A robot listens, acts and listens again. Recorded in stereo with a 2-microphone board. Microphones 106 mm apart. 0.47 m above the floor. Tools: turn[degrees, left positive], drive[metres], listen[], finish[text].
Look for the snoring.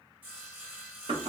Action: listen[]
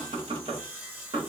Action: listen[]
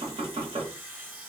Action: finish[I can't make out snoring, only knocking and sawing.]